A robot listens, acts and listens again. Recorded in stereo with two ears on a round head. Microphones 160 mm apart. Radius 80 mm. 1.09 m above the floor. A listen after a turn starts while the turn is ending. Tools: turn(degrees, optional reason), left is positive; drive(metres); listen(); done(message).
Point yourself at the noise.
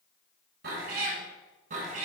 turn(degrees=-45, reason="The cat meowing: about 45° right or 135° right.")
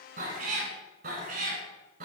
turn(degrees=-50, reason="The cat meowing: about 50° right or 130° right.")
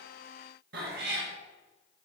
turn(degrees=-65, reason="So it is at 65° right.")
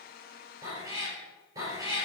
turn(degrees=-20, reason="The cat meowing is now 20° right.")
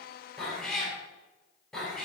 done("Found it: a cat meowing, straight ahead, 2 to 4 m away.")